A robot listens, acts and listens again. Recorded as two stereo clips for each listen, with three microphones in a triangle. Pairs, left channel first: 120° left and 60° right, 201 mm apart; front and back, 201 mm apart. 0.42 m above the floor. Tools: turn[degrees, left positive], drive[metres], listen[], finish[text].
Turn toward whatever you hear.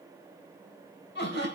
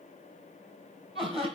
Thought: The laughter: 120° left.
Action: turn[120]
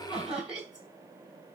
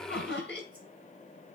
Thought: The laughter is now 25° left.
Action: turn[25]
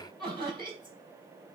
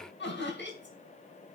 Action: finish[Found it: laughter, straight ahead.]